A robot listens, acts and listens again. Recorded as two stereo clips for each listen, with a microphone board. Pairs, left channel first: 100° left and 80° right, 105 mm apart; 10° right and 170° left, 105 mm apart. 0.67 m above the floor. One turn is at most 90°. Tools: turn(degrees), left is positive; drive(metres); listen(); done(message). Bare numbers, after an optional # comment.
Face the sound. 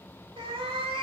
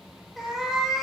# The cat meowing: 100° right.
turn(-90)
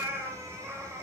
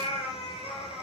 # The cat meowing is now 15° right.
turn(-15)
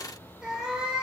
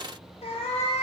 done("Facing the cat meowing.")